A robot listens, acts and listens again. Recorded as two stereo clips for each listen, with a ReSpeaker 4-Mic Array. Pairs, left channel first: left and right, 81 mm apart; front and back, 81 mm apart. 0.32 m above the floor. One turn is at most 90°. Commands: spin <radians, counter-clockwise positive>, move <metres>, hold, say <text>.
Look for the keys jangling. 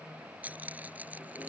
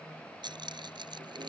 spin -1.57
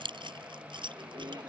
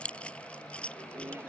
spin -1.31
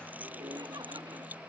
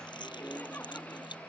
spin -0.35
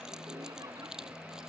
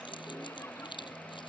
say Facing the keys jangling.